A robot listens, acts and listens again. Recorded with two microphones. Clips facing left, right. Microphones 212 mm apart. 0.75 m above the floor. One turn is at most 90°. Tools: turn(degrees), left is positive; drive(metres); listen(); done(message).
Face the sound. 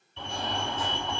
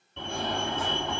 turn(degrees=-60)
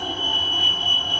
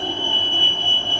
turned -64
turn(degrees=-30)
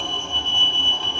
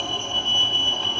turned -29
done("Facing the fire alarm.")